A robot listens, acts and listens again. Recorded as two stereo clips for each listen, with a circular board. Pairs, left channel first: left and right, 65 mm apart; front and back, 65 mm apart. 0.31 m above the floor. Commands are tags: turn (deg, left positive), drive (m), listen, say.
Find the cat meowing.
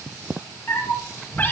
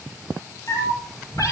<turn deg="30"/>
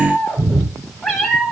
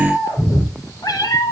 <say>Found it: a cat meowing, straight ahead.</say>